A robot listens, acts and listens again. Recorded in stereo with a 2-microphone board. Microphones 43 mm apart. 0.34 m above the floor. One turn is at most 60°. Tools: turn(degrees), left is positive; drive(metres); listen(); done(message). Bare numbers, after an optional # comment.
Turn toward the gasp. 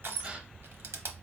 # The gasp: about 25° right or 155° right.
turn(-25)
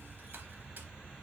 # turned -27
listen()
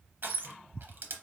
done("I heard a gasp, but can't make it out now. It was about straight ahead or 125° right.")